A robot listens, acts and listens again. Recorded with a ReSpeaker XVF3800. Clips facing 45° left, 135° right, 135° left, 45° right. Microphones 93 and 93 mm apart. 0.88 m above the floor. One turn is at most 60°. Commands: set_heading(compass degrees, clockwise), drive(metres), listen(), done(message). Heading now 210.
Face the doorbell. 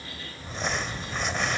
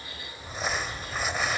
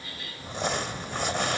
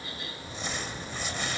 listen()
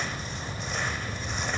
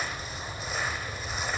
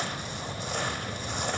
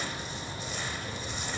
listen()
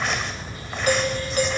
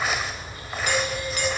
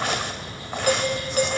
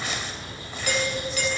set_heading(150)
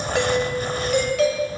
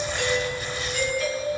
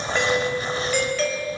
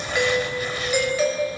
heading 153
set_heading(118)
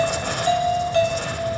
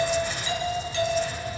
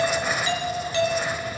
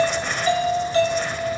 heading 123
done("Found it: a doorbell, straight ahead, over 4 m away.")